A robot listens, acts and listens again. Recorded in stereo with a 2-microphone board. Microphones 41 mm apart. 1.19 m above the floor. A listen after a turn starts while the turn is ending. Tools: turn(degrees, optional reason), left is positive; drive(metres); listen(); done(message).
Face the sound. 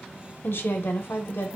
turn(degrees=65, reason="The woman speaking: about 65° left or 115° left.")
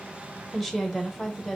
done("Facing the woman speaking.")